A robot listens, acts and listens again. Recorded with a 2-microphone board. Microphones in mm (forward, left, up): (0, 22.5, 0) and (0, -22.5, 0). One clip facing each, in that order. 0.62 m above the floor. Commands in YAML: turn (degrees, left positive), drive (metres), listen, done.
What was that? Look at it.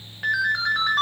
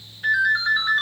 turn: 70
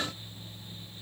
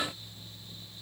listen: true
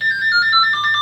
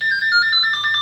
done: "Facing the ringtone."